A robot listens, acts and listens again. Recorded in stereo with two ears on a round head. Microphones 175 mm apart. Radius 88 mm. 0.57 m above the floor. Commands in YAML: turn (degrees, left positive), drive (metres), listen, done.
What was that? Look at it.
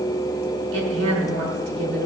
turn: -65
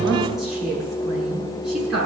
done: "Found it: a woman speaking, straight ahead."